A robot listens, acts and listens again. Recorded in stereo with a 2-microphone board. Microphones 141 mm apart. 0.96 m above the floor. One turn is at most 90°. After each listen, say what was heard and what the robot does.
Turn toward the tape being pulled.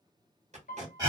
The tape being pulled: about 55° right or 125° right. Turn 55° right.
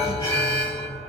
Keep listening.
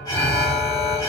Keep listening.
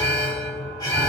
I heard tape being pulled, but can't make it out now. It was about straight ahead or 70° right.